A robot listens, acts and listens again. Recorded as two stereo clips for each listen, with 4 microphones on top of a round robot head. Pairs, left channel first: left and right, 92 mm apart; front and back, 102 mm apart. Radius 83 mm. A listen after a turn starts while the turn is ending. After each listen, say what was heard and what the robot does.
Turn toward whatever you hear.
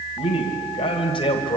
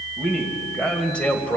The man speaking: 75° left. Turn 75° left.
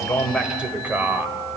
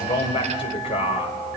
The man speaking is now 25° right. Turn 25° right.
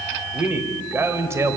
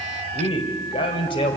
The man speaking is now 35° right. Turn 35° right.
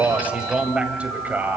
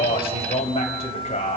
The man speaking is now 20° right. Turn 20° right.
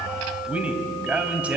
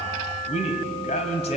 The man speaking is now 15° right. Turn 15° right.
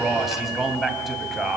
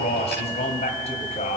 Found it: a man speaking, straight ahead, 2 to 4 m away.